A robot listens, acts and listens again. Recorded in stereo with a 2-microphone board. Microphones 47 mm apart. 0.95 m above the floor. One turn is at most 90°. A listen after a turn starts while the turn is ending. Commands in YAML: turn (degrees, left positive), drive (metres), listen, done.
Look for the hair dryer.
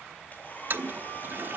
turn: 40
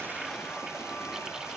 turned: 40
listen: true
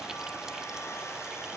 turn: 90
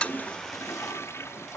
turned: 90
turn: 10
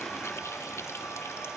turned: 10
done: "Facing the hair dryer."